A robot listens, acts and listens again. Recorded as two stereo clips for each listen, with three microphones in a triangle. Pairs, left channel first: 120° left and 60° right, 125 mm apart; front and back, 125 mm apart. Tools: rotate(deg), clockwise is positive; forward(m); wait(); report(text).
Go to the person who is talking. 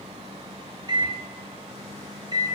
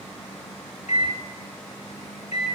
wait()
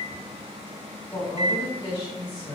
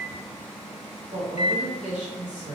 rotate(-175)
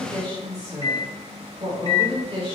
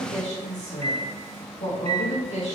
rotate(10)
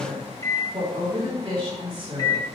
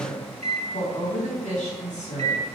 forward(1.0)
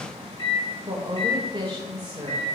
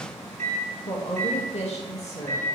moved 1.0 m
rotate(10)
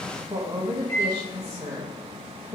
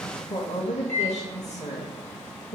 forward(1.0)
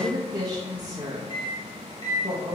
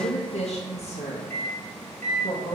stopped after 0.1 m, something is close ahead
report("Arrived at the woman speaking, straight ahead.")